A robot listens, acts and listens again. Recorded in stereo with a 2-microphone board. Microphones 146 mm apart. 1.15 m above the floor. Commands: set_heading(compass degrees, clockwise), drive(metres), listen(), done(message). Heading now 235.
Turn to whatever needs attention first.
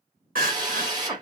set_heading(305)
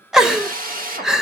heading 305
done("Facing the crying.")